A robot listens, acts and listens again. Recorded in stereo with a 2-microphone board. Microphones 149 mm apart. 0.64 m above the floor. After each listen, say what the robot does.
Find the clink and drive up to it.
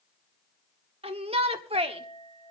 Turn 35° left.
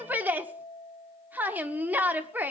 Turn 105° left.
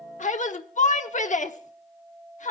Turn 10° right.
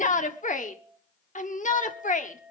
Drive 1.0 m forward.
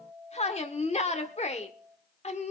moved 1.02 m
Turn 10° right.
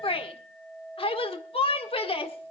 Drive 1.0 m forward.
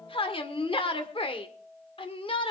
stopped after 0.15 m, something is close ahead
Arrived at the clink, straight ahead.